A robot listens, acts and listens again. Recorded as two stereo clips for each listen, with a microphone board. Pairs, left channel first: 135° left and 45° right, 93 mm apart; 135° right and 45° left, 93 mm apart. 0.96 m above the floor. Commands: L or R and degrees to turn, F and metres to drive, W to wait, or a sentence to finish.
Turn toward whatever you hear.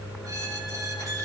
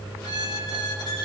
R95
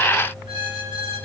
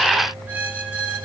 R25
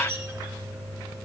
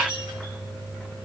L15
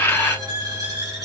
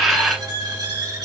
Facing the squeak.